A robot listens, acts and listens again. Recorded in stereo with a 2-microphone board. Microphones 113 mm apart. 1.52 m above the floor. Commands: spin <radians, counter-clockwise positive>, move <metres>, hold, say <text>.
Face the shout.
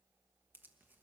hold
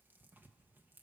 hold
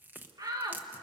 spin -0.61
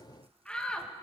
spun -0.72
spin 0.17
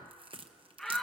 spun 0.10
say Facing the shout.